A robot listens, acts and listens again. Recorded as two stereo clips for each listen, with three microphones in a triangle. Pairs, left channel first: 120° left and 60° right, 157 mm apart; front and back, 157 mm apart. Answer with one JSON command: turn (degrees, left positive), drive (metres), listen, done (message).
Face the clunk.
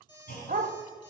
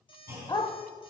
{"turn": 110}
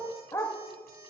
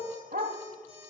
{"done": "I heard a clunk from this way, but can't make it out now."}